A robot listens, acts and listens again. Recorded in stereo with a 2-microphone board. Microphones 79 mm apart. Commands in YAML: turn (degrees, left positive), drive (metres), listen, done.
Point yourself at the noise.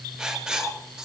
turn: -30
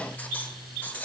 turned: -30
turn: 20
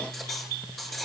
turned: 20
done: "Found it: writing, straight ahead."